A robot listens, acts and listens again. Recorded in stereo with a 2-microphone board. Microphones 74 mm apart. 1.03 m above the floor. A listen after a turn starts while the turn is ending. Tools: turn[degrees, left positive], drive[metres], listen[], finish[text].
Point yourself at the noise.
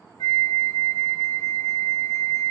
Thought: The flute: about 65° left or 115° left.
Action: turn[65]
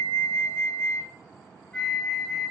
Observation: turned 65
Thought: So it is at 20° left.
Action: turn[20]
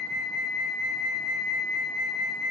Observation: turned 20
Action: finish[Found it: a flute, straight ahead.]